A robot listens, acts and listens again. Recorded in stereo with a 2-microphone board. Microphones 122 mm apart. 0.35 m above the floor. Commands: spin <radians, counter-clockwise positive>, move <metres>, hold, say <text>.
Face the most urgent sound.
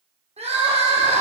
spin -0.96
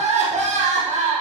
spin -1.13
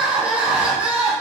spin -0.17
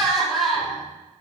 say Facing the crying, 2 to 4 m away.